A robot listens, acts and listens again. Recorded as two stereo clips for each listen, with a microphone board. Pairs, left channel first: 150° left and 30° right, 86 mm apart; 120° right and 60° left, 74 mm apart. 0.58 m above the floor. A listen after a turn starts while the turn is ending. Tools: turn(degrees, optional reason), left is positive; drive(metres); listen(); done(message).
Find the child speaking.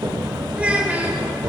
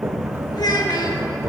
turn(degrees=-95, reason="The child speaking: 95° right.")
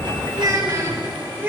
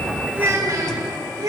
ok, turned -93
turn(degrees=35, reason="The child speaking is now 35° left.")
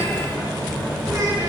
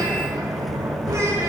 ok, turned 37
listen()
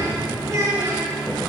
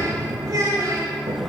turn(degrees=25, reason="The child speaking is now 25° left.")
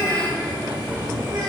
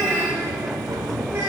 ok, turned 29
turn(degrees=10, reason="The child speaking is now 10° left.")
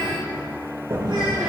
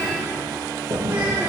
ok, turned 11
listen()
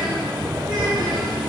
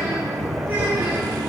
listen()
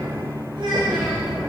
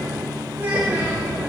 done("Facing the child speaking, 2 to 4 m away.")